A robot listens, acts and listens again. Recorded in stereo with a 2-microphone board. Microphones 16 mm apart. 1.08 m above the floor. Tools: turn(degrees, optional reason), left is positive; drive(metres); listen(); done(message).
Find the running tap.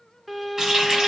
turn(degrees=-40, reason="The running tap: about 40° right or 140° right.")
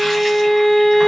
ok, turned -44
listen()
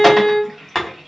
done("Facing the running tap.")